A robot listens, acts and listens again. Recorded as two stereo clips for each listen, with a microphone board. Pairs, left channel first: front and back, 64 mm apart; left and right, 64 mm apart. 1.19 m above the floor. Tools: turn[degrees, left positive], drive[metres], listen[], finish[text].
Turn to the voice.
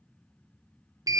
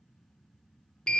Action: listen[]
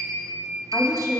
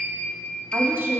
Thought: The woman speaking: 30° right.
Action: turn[-30]
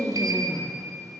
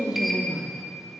Thought: The woman speaking is now 15° right.
Action: turn[-15]
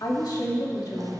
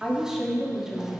Action: finish[Facing the woman speaking.]